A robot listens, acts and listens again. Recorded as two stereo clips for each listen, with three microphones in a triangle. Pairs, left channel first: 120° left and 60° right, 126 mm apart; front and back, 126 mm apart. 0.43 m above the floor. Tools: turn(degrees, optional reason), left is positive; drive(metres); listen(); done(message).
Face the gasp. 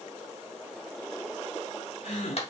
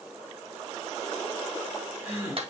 turn(degrees=110, reason="The gasp: 110° left.")
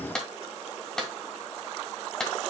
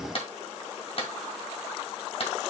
done("I heard a gasp from this way, but can't make it out now.")